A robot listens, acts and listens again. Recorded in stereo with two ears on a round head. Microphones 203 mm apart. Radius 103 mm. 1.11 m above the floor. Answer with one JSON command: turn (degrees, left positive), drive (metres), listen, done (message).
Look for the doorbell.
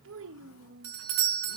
{"turn": -70}
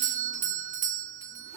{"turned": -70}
{"turn": -35}
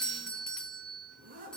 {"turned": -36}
{"done": "Facing the doorbell."}